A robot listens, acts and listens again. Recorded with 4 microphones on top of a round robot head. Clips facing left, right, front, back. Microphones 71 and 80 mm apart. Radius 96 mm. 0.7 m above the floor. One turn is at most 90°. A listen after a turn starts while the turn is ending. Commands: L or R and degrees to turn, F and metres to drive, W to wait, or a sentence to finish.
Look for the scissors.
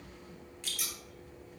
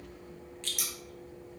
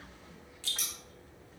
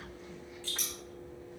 R80
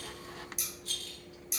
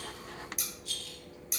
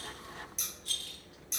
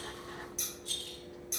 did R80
R50
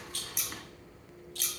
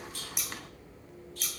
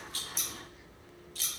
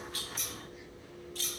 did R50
Facing the scissors, 1 to 2 m away.